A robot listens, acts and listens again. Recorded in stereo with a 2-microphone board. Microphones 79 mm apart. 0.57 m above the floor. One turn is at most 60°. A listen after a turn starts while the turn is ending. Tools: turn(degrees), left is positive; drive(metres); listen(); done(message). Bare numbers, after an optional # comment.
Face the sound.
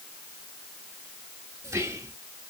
# The whispering: about 35° right or 145° right.
turn(-35)
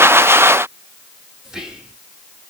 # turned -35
# So it is at 10° right.
turn(-10)
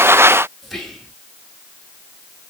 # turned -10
done("Facing the whispering.")